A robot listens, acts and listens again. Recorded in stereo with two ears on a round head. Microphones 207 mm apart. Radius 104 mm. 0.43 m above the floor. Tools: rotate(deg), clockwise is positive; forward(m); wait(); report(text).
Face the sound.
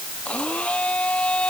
rotate(-30)
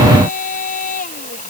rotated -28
rotate(-145)
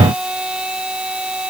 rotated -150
report("Facing the blender.")